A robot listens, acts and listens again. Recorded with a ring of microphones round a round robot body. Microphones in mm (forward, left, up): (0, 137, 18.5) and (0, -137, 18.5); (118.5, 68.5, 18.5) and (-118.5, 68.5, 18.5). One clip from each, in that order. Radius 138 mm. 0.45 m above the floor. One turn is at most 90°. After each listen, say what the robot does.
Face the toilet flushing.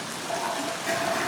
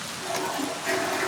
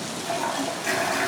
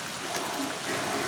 Facing the toilet flushing.